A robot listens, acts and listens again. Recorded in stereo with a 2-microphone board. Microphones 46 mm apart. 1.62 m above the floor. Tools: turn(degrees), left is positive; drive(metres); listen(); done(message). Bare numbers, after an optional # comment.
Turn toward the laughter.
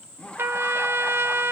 # The laughter: about 30° left or 150° left.
turn(30)
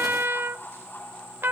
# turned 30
# So it is at 120° left.
turn(120)
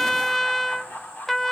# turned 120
# The laughter is now 45° left.
turn(45)
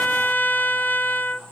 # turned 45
listen()
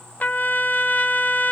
listen()
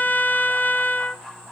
done("Found it: laughter, straight ahead, over 4 m away.")